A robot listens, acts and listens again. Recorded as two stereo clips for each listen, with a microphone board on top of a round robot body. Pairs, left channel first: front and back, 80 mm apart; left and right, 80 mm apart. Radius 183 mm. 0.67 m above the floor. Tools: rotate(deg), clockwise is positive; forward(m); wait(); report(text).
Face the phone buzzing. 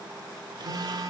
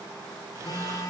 rotate(-140)
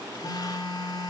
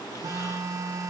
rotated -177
rotate(40)
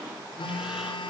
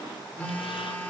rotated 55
rotate(-15)
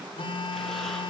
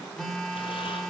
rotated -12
report("Found it: a phone buzzing, straight ahead.")